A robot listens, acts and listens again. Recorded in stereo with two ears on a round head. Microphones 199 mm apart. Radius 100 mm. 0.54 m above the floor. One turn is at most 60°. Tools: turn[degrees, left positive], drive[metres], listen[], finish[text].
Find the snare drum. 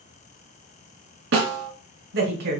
Thought: The snare drum: about 60° right or 120° right.
Action: turn[-60]
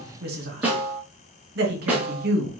Action: finish[Found it: a snare drum, straight ahead.]